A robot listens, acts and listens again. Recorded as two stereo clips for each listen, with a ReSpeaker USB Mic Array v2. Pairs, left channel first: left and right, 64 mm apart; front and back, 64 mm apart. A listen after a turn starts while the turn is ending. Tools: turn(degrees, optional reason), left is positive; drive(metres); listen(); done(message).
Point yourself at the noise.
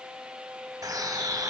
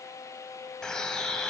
turn(degrees=-75, reason="The bird: 75° right.")
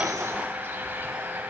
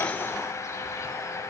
turn(degrees=-35, reason="The bird is now 35° right.")
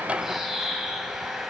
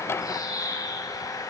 done("Found it: a bird, straight ahead, 1 to 2 m away.")